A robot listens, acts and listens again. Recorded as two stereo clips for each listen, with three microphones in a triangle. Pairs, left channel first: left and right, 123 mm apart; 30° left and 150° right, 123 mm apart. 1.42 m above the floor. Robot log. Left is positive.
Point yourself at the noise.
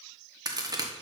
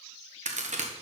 note: The crack: 150° right.
cmd yaw -150
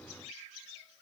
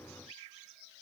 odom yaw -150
end: I heard a crack from this way, but can't make it out now.